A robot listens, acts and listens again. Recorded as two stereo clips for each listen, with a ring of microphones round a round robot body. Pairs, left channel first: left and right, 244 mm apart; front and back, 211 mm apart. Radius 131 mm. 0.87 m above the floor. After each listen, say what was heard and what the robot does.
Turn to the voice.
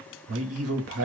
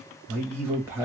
The man speaking: 100° right. Turn 100° right.
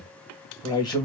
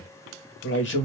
The man speaking is now 20° left. Turn 20° left.
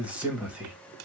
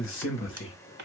Found it: a man speaking, straight ahead, 1 to 2 m away.